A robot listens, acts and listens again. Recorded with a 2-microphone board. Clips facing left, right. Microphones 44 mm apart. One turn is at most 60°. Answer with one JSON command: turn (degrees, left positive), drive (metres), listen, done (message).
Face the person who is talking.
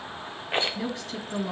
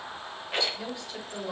{"turn": 60}
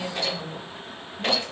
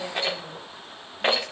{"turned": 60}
{"turn": 60}
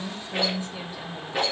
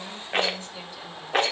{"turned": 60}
{"turn": 25}
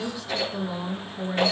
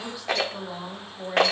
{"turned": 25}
{"done": "Facing the woman speaking, 2 to 4 m away."}